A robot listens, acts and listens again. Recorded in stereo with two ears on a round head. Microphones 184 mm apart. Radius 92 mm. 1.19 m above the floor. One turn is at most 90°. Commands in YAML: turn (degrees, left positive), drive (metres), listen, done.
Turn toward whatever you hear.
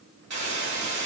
turn: -60
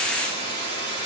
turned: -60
turn: -55
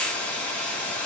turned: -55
done: "Facing the hiss, 2 to 4 m away."